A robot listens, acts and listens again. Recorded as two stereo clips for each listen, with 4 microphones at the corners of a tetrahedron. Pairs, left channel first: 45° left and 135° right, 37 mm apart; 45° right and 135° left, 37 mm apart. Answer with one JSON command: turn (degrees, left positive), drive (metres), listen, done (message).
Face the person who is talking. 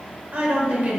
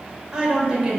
{"turn": -155}
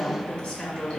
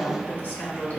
{"done": "Facing the woman speaking."}